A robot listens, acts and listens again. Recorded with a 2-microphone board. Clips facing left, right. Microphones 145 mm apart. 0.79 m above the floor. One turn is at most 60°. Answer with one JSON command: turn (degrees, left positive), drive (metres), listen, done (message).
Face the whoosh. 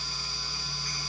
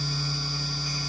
{"listen": true}
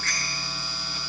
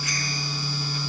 {"listen": true}
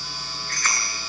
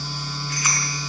{"done": "I can't make out a whoosh to turn to."}